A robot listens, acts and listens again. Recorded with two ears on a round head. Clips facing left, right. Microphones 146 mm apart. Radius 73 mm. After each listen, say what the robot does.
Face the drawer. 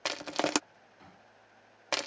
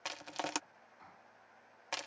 Turn 35° left.
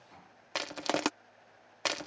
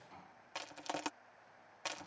Found it: a drawer, straight ahead.